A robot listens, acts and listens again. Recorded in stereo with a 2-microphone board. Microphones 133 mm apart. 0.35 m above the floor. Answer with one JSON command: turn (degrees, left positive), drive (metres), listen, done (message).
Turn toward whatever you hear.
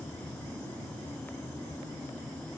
{"listen": true}
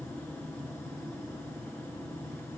{"listen": true}
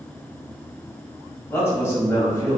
{"turn": 20}
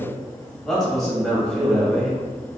{"done": "Facing the man speaking."}